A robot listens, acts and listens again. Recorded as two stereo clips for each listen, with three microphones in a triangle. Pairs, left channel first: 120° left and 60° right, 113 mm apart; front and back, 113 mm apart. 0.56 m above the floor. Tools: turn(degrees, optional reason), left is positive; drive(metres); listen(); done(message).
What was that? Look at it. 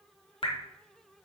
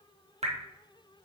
turn(degrees=160, reason="The dripping: 160° left.")
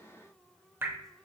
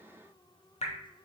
turn(degrees=10, reason="The dripping is now 10° left.")
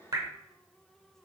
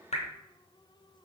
done("Facing the dripping.")